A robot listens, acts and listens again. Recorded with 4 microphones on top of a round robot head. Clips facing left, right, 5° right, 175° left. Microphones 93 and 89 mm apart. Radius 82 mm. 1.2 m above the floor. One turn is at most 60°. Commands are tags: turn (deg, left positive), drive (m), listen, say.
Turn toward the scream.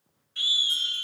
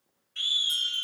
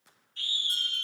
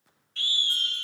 <turn deg="60"/>
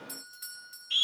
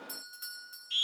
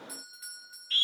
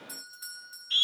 <turn deg="60"/>
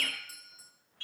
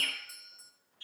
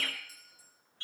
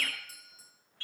<turn deg="60"/>
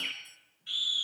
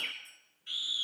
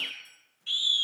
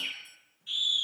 <say>Facing the scream.</say>